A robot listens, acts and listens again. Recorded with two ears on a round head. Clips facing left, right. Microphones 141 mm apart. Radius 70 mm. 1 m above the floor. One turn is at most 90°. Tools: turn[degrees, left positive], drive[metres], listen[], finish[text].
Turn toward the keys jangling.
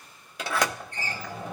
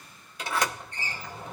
Action: listen[]
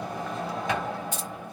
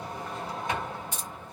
Thought: The keys jangling: about 75° left or 105° left.
Action: turn[75]
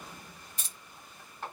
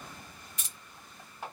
Thought: So it is at 30° left.
Action: turn[30]
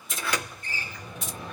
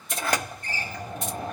Action: finish[Facing the keys jangling, 2 to 4 m away.]